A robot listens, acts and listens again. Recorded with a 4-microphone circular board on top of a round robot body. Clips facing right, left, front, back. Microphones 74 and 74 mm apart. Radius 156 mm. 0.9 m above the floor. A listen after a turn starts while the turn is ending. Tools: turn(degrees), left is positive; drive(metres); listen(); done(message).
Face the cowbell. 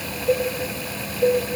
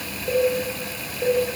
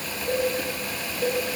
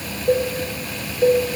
turn(degrees=165)
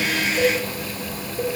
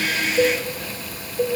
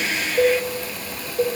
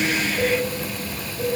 turn(degrees=-20)
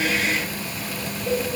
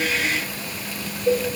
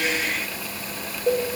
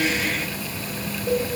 done("Facing the cowbell.")